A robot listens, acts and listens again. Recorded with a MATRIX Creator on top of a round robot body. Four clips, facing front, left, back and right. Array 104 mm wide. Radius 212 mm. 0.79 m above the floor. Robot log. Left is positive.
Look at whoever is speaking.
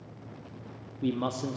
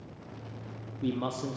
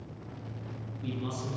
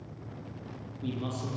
note: The man speaking: 30° left.
cmd yaw +30
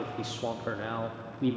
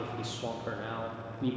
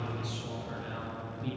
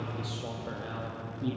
note: The man speaking is now 10° left.
cmd yaw +10
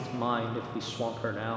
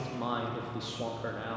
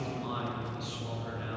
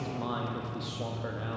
end: Facing the man speaking, 1 to 2 m away.